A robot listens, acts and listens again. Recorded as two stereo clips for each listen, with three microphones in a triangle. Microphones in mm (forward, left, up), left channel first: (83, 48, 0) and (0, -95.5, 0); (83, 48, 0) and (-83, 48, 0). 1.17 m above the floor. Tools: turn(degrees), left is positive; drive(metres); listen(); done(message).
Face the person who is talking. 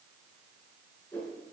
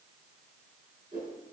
listen()
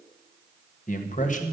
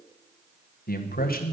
turn(degrees=20)
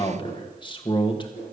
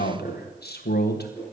done("Facing the man speaking.")